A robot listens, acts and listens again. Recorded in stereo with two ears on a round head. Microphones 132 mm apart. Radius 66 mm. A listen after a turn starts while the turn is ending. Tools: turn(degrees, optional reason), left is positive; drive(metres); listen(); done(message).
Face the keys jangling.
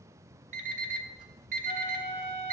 listen()
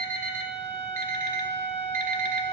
listen()
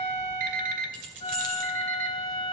turn(degrees=-60, reason="The keys jangling: about 60° right or 120° right.")
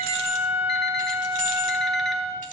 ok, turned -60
turn(degrees=-55, reason="So it is at 55° right.")
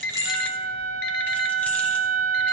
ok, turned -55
listen()
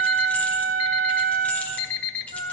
listen()
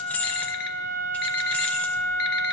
turn(degrees=10, reason="The keys jangling is now 10° left.")
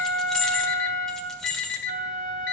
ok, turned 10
done("Found it: keys jangling, straight ahead, 1 to 2 m away.")